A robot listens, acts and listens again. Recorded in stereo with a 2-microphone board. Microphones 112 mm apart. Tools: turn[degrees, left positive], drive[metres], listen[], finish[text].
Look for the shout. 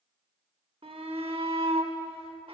Thought: The shout: about 60° right or 120° right.
Action: turn[-60]
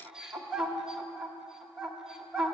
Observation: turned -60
Action: finish[Facing the shout, 1 to 2 m away.]